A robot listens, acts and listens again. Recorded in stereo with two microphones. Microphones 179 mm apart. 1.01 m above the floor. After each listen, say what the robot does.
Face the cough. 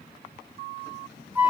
Keep listening.
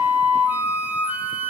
Keep listening.
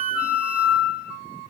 I can't make out a cough, only a flute.